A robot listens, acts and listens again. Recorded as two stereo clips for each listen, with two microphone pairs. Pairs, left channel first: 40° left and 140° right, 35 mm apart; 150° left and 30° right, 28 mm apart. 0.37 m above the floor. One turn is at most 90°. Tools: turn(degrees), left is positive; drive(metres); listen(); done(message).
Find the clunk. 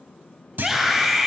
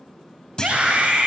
turn(degrees=-90)
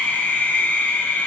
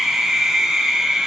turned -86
turn(degrees=-65)
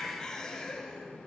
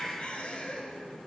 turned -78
turn(degrees=15)
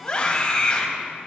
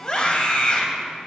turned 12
done("Facing where the clunk came from. I can't hear it now.")